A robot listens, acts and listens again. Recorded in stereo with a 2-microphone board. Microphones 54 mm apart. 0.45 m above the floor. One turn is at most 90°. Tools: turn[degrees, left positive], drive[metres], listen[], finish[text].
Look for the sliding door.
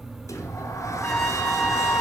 Thought: The sliding door: about 75° left or 105° left.
Action: turn[75]
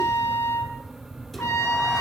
Action: listen[]
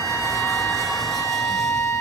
Action: listen[]
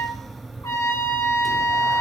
Action: finish[I heard a sliding door, but can't make it out now. It was about straight ahead or 30° left.]